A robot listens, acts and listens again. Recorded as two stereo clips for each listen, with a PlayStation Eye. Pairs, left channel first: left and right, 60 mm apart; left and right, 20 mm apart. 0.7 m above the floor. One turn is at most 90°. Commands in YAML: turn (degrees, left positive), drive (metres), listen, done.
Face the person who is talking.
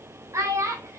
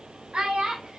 turn: -55
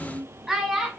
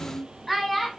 done: "Facing the child speaking, 2 to 4 m away."